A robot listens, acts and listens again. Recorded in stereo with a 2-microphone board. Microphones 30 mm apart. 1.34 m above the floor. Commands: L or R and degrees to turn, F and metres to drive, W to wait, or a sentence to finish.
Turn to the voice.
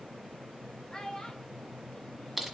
L25
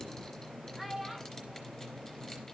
Facing the child speaking, 1 to 2 m away.